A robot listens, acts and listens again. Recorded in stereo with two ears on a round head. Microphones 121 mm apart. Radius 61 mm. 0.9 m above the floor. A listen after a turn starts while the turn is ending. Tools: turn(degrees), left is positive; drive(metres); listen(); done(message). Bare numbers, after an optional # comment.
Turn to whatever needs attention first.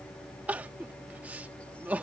turn(-30)
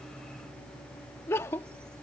# So it is at 20° left.
turn(20)
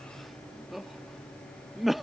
done("Found it: crying, straight ahead.")